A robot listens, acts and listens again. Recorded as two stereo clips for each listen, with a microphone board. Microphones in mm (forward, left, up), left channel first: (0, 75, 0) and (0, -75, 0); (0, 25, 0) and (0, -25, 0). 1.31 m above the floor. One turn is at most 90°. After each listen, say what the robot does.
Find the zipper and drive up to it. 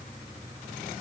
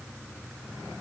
Keep listening.
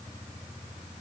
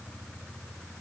Keep listening.
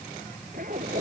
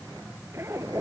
Turn 65° right.
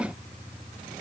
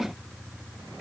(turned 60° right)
Keep listening.
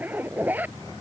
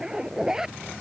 Turn 10° right.
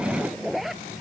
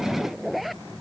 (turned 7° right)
Drive 1.0 m forward.
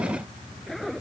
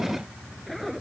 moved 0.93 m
Drive 1.0 m forward.
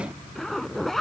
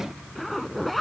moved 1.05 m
Drive 1.0 m forward.
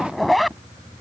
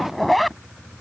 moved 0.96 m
Drive 1.0 m forward.
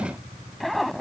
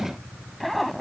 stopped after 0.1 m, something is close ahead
Arrived at the zipper, straight ahead.